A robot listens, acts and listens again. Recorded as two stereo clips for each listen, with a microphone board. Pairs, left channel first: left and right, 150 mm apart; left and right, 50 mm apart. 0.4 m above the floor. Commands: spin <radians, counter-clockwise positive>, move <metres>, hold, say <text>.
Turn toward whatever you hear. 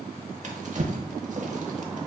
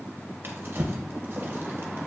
spin -0.87
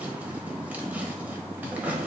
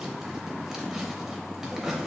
spin -0.17
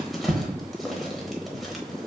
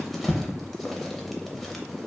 say Found it: a drawer, straight ahead, under 1 m away.